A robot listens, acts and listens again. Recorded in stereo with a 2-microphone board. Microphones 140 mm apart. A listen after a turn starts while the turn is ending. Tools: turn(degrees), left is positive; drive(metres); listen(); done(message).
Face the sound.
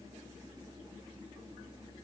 listen()
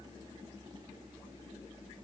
listen()
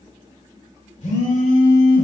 turn(degrees=60)
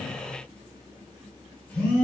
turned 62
turn(degrees=10)
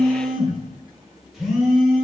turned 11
done("Found it: a phone buzzing, straight ahead, 2 to 4 m away.")